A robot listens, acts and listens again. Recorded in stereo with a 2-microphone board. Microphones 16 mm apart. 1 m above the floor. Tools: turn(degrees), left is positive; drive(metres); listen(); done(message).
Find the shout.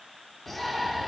turn(degrees=30)
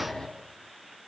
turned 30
turn(degrees=135)
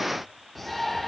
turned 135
done("Facing the shout.")